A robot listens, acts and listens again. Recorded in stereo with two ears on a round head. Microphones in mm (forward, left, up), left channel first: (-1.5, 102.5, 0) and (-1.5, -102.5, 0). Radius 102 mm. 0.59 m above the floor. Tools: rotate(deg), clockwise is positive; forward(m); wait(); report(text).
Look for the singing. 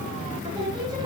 rotate(15)
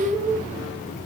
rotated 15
rotate(-30)
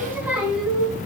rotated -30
report("Facing the singing.")